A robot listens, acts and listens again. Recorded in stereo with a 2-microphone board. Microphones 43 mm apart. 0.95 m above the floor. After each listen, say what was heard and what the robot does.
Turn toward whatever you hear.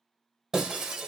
Turn 30° right.
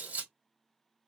So it is at 135° right. Turn 135° right.
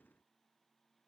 I heard breaking glass from this way, but can't make it out now.